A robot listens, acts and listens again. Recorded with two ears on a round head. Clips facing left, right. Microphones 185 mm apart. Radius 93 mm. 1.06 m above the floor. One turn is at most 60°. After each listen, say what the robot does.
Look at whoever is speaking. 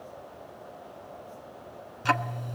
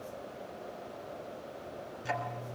Keep listening.
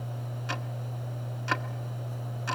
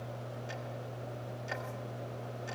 Keep listening.
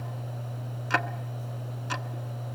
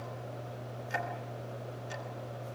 I can't make out anyone speaking to turn to.